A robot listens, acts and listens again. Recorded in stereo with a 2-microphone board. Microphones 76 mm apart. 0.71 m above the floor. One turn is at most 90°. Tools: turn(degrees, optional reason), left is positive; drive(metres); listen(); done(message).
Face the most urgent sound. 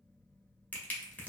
listen()
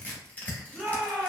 turn(degrees=30)
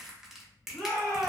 turn(degrees=90, reason="So it is at 155° left.")
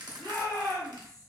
turn(degrees=65, reason="The shout is now 65° left.")
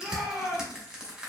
turn(degrees=-10, reason="The shout is now 10° right.")
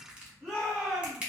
done("Facing the shout, 1 to 2 m away.")